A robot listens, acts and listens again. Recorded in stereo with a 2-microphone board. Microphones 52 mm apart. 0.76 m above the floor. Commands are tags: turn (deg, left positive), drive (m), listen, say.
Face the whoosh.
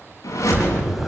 <turn deg="90"/>
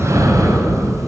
<listen/>
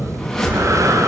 <say>Found it: a whoosh, straight ahead.</say>